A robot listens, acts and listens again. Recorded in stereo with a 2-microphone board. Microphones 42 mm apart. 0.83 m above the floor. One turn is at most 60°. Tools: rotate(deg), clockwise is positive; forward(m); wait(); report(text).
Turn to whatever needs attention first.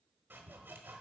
wait()
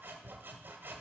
wait()
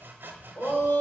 rotate(-60)
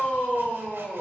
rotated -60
rotate(-45)
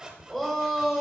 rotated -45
report("Facing the shout.")